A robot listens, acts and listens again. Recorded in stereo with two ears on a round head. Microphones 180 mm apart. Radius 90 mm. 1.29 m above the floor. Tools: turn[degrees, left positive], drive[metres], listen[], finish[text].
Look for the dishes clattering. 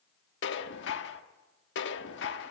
Thought: The dishes clattering: about 65° left or 115° left.
Action: turn[65]
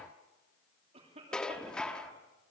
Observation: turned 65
Action: finish[Facing the dishes clattering.]